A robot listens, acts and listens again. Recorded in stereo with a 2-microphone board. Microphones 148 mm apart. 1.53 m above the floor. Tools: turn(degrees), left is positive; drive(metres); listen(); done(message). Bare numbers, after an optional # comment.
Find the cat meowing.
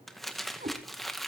# The cat meowing: about 65° right or 115° right.
turn(-65)
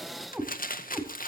# So it is at 10° right.
turn(-10)
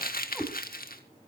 done("Found it: a cat meowing, straight ahead, 2 to 4 m away.")